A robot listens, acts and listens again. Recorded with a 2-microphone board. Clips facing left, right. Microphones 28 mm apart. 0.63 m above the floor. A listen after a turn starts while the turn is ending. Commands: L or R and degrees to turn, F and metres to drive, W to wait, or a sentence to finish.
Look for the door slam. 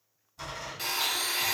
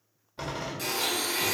R40
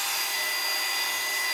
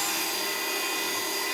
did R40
W
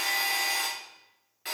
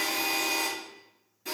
I heard a door slam, but can't make it out now. It was about straight ahead or 100° right.